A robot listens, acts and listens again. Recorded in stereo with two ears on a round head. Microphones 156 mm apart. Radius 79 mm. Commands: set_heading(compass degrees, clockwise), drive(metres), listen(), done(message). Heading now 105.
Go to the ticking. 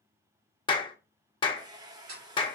set_heading(170)
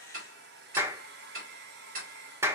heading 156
set_heading(211)
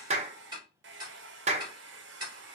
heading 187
set_heading(217)
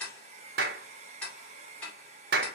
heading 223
set_heading(213)
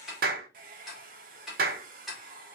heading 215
drive(1.0)
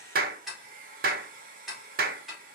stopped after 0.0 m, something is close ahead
done("Blocked. The ticking is further on, straight ahead.")